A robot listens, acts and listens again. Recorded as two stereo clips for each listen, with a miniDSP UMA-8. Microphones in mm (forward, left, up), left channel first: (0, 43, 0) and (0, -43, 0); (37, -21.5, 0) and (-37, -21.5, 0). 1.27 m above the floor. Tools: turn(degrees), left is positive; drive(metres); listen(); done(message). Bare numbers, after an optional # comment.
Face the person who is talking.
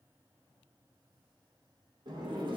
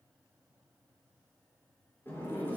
listen()
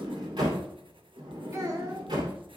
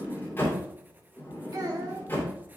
# The child speaking: 140° right.
turn(-140)
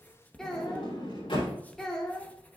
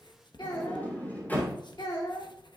done("Facing the child speaking, 2 to 4 m away.")